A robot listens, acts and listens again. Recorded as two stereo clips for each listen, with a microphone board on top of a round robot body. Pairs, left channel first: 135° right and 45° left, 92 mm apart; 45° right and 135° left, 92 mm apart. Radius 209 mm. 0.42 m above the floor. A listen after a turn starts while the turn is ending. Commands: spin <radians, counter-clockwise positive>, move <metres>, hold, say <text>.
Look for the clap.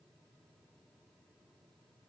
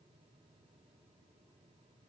hold
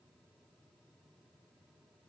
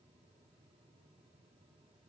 hold
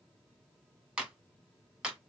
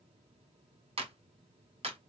spin 2.18
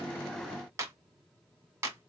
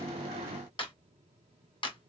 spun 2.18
spin -0.26
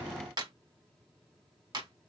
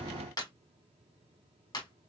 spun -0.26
say Facing the clap.